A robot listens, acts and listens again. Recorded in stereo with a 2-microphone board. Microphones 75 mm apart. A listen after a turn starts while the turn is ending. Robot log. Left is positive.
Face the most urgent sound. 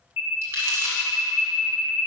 note: The alarm: about 30° right or 150° right.
cmd yaw -30
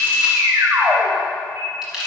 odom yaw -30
note: So it is at 115° right.
cmd yaw -115
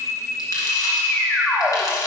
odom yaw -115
note: The alarm is now 20° left.
cmd yaw +20
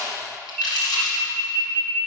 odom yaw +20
end: Found it: an alarm, straight ahead.